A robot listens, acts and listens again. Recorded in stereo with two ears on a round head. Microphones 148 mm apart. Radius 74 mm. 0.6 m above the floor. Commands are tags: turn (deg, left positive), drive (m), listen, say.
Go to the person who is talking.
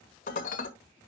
<listen/>
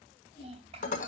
<turn deg="-35"/>
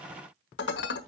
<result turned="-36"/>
<listen/>
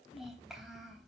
<drive m="1.0"/>
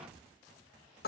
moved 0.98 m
<listen/>
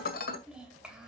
<drive m="1.0"/>
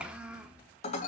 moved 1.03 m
<drive m="1.0"/>
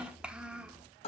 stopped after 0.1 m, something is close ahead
<say>Arrived at the child speaking, straight ahead.</say>